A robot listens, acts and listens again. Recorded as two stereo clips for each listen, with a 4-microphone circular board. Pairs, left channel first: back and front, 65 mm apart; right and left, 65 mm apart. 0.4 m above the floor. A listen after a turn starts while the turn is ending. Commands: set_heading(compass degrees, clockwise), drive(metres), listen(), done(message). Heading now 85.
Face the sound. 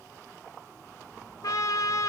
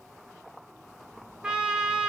set_heading(280)
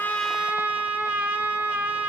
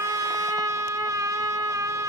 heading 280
set_heading(215)
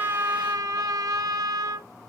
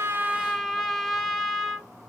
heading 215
done("Facing the trumpet, under 1 m away.")